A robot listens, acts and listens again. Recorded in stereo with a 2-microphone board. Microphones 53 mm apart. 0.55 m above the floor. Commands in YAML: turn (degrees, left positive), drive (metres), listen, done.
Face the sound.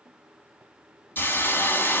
turn: 40
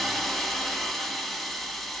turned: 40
done: "Facing the hiss, 1 to 2 m away."